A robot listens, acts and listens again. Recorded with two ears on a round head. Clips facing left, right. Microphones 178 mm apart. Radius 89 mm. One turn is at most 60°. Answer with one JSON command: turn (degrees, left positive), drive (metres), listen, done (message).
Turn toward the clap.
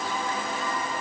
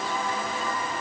{"listen": true}
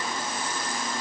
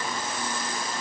{"listen": true}
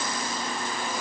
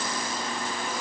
{"done": "I can't make out a clap to turn to."}